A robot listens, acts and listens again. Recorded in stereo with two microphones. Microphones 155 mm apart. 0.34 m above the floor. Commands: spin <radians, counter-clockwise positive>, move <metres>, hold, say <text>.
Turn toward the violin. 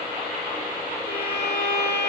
spin 1.57
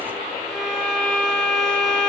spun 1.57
say Facing the violin, 2 to 4 m away.